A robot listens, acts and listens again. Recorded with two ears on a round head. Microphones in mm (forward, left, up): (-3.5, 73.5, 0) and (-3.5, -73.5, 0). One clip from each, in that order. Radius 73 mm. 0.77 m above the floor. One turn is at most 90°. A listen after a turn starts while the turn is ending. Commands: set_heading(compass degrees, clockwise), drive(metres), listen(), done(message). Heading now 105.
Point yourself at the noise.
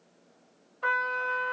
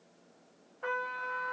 set_heading(35)
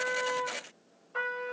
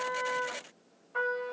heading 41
set_heading(31)
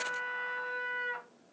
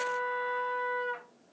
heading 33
done("Facing the trumpet.")